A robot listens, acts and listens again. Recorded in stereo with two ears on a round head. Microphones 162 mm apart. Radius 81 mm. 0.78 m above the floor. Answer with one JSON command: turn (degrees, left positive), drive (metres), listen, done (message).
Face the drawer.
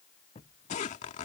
{"turn": 35}
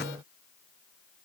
{"listen": true}
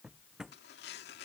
{"done": "Facing the drawer."}